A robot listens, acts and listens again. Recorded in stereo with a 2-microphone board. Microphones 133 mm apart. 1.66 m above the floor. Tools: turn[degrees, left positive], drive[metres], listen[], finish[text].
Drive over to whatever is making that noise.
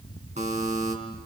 Thought: The buzzer: about 70° right or 110° right.
Action: turn[-70]
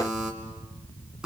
Action: drive[1.0]
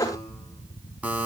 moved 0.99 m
Thought: The buzzer is now 10° right.
Action: turn[-10]
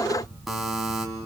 Action: drive[1.0]
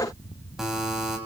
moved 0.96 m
Action: drive[1.0]
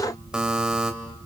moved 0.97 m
Thought: The buzzer is now 10° right.
Action: turn[-10]
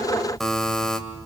Action: drive[1.0]
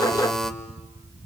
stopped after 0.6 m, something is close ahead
Action: finish[Arrived at the buzzer, straight ahead.]